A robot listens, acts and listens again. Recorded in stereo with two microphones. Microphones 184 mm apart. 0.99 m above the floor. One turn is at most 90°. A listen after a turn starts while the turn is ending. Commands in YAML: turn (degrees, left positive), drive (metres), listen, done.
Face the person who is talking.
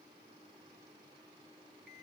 listen: true
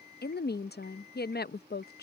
turn: 60
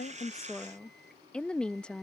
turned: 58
done: "Facing the woman speaking."